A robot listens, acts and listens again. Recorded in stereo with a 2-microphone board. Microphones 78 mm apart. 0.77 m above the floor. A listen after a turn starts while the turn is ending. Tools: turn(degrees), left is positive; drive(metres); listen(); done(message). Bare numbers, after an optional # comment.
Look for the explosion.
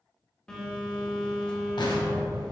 # The explosion: about 70° left or 110° left.
turn(70)
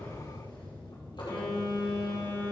listen()
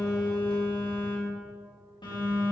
done("I heard an explosion, but can't make it out now. It was about straight ahead or 40° left.")